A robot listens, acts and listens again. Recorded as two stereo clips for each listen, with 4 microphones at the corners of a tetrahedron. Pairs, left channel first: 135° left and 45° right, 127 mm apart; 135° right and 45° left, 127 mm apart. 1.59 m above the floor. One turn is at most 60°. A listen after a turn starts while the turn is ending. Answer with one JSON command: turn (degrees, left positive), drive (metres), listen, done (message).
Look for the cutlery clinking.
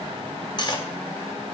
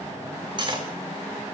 {"turn": 60}
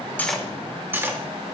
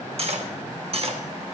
{"turn": 25}
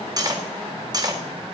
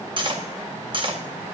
{"done": "Found it: cutlery clinking, straight ahead."}